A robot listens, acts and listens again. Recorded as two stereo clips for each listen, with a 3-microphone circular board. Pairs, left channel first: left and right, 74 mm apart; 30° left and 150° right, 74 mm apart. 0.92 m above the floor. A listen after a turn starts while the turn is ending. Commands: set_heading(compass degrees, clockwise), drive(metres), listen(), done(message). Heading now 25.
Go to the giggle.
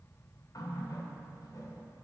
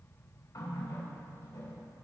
listen()
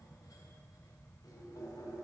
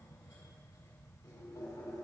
listen()
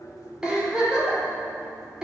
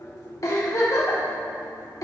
set_heading(40)
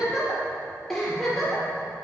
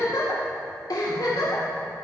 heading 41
drive(1.0)
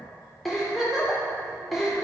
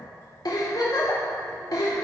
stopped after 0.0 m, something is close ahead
done("Something is in my way. I am facing the giggle but have not reached it.")